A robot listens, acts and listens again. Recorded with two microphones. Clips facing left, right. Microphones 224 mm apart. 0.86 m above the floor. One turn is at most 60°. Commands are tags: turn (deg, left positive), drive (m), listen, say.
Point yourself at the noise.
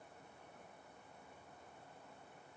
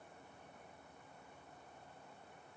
<listen/>
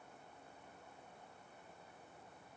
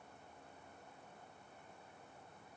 <listen/>
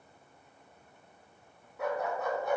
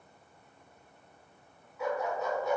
<turn deg="55"/>
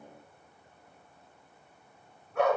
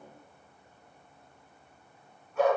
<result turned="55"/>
<turn deg="60"/>
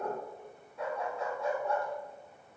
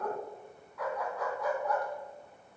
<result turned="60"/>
<turn deg="25"/>
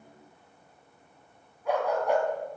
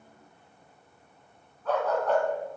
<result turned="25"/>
<turn deg="10"/>
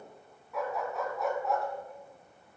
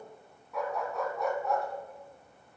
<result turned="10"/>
<say>Facing the dog barking.</say>